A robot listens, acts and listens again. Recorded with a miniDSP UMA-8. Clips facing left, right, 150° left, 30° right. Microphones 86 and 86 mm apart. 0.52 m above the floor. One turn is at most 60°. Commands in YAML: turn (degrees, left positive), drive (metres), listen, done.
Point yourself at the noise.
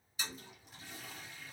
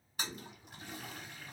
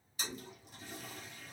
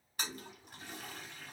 turn: -60
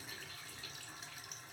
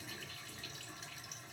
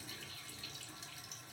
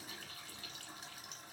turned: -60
done: "Facing the toilet flushing."